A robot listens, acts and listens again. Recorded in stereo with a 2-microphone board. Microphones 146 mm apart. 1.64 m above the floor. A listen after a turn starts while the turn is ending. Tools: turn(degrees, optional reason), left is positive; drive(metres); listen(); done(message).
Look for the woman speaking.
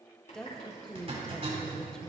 turn(degrees=30)
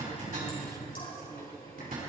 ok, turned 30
listen()
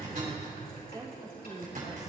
turn(degrees=-25, reason="So it is at 25° right.")
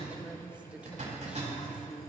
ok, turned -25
listen()
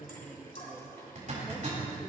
listen()
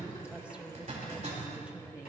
done("I heard a woman speaking from this way, but can't make it out now.")